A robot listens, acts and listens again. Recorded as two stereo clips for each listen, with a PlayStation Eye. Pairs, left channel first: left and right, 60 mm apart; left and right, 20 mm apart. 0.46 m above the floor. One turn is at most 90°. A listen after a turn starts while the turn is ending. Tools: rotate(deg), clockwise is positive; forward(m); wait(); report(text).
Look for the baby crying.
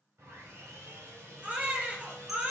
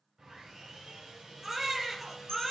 rotate(25)
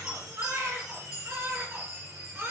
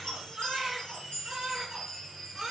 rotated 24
rotate(90)
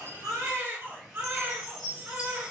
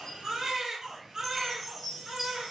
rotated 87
rotate(45)
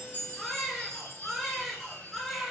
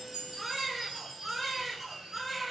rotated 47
report("Found it: a baby crying, straight ahead, 2 to 4 m away.")